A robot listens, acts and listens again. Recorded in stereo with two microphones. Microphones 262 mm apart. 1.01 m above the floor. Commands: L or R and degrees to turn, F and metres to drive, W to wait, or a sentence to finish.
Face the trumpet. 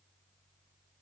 W
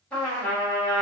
L30
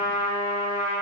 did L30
R25
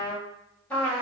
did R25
Facing the trumpet.